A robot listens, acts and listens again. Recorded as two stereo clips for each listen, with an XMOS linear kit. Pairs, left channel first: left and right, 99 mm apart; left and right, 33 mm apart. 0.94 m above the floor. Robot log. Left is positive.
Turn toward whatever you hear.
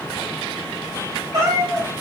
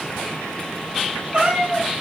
note: The cat meowing: about 35° right or 145° right.
cmd yaw -35
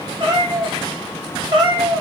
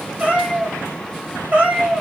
note: The cat meowing: about 45° right or 135° right.
cmd yaw -45
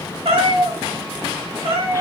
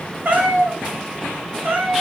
note: So it is at 110° right.
cmd yaw -110
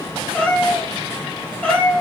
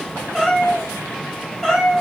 note: The cat meowing is now 10° left.
cmd yaw +10
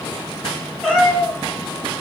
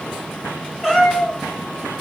end: Facing the cat meowing.